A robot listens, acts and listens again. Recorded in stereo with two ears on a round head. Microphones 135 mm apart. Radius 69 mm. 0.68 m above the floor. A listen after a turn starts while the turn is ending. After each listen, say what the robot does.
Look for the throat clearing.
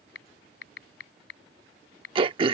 Turn 35° right.
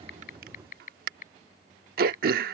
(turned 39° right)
Turn 105° right.
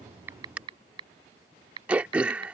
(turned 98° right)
Turn 10° right.
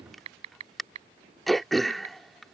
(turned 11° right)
Found it: throat clearing, straight ahead.